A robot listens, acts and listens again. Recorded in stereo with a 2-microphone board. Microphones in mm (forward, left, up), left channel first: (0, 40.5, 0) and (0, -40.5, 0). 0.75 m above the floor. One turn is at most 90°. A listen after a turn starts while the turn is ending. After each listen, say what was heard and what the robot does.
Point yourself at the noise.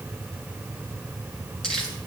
Turn 30° left.
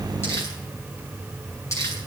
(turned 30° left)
So it is at 140° left. Turn 90° left.
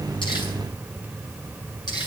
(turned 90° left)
The crumpling is now 60° left. Turn 60° left.
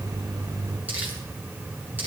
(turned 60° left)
Keep listening.
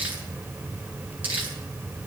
The crumpling is now 20° right. Turn 20° right.
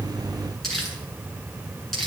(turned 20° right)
Facing the crumpling.